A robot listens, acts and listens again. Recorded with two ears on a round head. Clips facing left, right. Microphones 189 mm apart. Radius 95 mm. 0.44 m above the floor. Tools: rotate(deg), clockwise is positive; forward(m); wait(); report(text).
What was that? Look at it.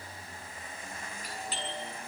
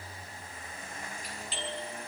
rotate(-40)
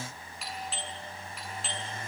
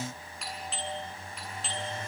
report("Facing the doorbell, over 4 m away.")